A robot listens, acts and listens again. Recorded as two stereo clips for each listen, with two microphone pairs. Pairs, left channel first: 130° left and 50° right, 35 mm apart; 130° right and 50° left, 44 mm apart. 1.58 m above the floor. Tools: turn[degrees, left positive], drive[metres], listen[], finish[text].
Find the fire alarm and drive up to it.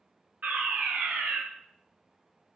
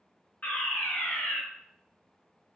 Thought: The fire alarm: 85° right.
Action: turn[-85]
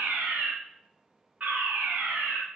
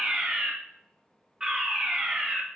Thought: The fire alarm is now 25° right.
Action: turn[-25]
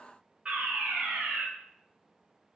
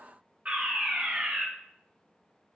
Action: drive[1.0]
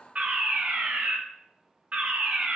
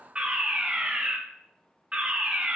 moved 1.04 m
Thought: The fire alarm is now 10° right.
Action: turn[-10]
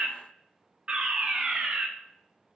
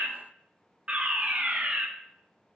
Action: drive[1.0]
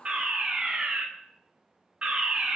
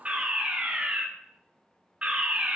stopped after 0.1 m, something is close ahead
Action: finish[I am next to the fire alarm.]